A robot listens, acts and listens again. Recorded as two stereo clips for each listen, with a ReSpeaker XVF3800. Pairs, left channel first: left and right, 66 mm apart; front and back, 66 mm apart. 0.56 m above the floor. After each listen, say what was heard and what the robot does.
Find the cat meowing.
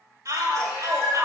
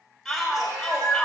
The cat meowing: 170° right. Turn 170° right.
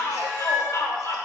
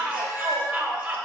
The cat meowing is now 30° left. Turn 30° left.
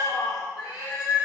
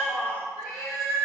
The cat meowing is now 10° right. Turn 10° right.
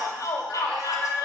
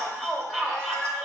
Facing the cat meowing.